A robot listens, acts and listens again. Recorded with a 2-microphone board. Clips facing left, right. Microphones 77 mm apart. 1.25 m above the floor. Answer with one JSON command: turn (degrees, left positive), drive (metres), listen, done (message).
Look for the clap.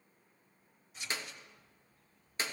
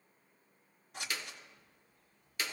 {"turn": 25}
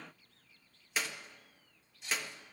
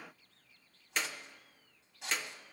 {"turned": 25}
{"done": "Facing the clap."}